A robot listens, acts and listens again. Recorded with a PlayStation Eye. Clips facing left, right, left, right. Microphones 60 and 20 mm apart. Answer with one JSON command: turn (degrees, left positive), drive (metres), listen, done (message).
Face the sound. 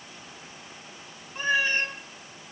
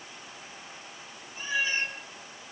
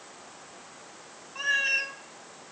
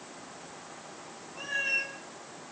{"turn": 55}
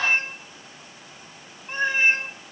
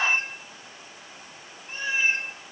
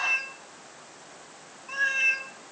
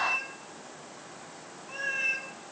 {"turn": 55}
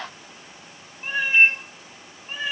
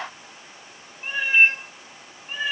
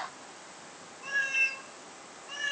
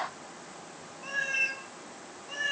{"done": "Found it: a cat meowing, straight ahead."}